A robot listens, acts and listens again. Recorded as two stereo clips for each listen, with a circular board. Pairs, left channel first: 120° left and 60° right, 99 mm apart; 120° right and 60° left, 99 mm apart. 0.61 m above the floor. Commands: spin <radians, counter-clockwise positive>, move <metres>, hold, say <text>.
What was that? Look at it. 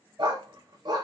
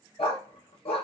spin -1.75
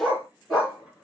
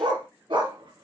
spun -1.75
spin 0.52
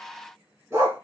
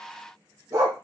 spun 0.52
say Found it: a dog barking, straight ahead.